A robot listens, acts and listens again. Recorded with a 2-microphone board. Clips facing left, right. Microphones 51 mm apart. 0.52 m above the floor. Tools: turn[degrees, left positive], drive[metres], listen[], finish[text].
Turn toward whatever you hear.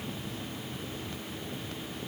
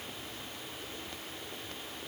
Action: listen[]
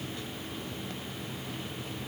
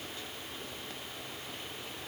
Action: listen[]
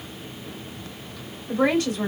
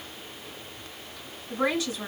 Thought: The woman speaking: about 55° left or 125° left.
Action: turn[55]
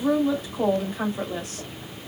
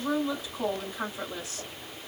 Thought: So it is at 65° left.
Action: turn[65]
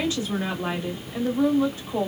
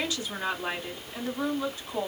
Thought: The woman speaking is now 30° left.
Action: turn[30]
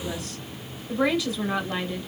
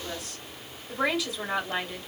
Action: finish[Found it: a woman speaking, straight ahead.]